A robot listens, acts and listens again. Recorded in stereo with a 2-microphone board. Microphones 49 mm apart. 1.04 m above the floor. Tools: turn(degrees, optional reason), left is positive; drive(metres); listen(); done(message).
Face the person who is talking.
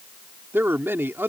turn(degrees=-50, reason="The man speaking: about 50° right or 130° right.")
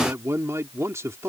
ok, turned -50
turn(degrees=-75, reason="So it is at 75° right.")
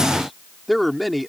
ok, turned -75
done("Facing the man speaking.")